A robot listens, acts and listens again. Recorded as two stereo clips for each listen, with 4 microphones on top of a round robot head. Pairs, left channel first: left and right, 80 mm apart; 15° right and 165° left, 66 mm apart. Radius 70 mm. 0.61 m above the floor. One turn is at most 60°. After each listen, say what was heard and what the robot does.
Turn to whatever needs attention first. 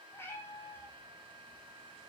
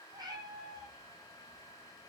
Keep listening.
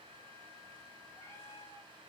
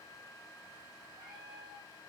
Keep listening.
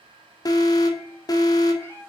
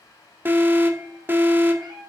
The alarm: 115° left. Turn 60° left.
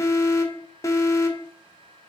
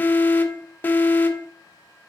The alarm is now 45° left. Turn 45° left.
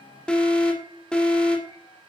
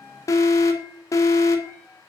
The alarm is now 10° left. Turn 10° left.
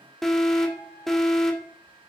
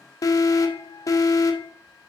Facing the alarm, 2 to 4 m away.